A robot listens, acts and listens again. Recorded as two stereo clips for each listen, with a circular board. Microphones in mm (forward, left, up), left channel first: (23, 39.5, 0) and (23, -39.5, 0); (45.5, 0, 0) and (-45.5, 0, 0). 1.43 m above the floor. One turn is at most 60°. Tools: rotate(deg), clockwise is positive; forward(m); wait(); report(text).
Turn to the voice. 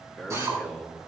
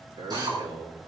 rotate(-60)
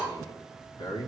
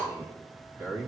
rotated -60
rotate(-60)
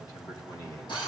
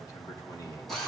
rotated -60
rotate(-50)
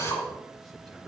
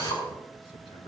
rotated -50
wait()
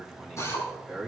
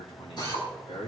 report("Facing the man speaking, 2 to 4 m away.")